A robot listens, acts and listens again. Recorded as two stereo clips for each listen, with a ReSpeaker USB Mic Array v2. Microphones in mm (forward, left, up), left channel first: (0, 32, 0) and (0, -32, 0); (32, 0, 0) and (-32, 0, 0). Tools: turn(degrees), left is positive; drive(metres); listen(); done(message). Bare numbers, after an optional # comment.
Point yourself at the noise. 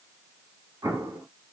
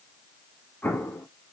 # The explosion: 65° right.
turn(-65)
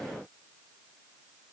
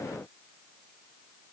done("Facing where the explosion came from. I can't hear it now.")